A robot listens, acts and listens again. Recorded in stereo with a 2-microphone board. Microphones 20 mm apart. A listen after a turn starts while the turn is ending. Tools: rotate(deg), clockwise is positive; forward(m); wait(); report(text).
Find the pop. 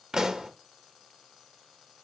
rotate(50)
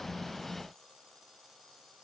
wait()
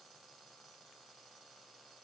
report("I heard a pop, but can't make it out now. It was about straight ahead or 80° right.")